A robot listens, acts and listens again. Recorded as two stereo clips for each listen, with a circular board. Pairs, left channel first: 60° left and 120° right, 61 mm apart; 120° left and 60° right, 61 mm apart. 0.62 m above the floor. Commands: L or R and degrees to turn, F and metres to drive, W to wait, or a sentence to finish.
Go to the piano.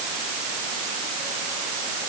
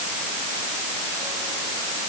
W
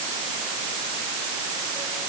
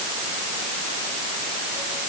W
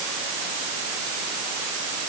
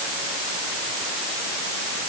I can't make out a piano.